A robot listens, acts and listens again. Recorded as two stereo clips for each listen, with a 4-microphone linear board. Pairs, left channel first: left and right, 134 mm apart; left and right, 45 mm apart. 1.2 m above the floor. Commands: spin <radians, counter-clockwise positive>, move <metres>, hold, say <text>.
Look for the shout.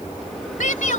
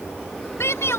spin 1.57
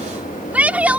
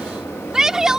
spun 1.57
spin -0.17
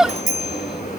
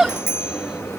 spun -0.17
say Facing the shout.